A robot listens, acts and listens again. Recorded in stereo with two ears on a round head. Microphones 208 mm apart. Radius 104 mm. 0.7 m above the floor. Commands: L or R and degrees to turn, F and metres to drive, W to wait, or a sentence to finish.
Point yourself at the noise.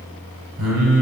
R90
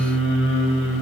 Found it: singing, straight ahead, 2 to 4 m away.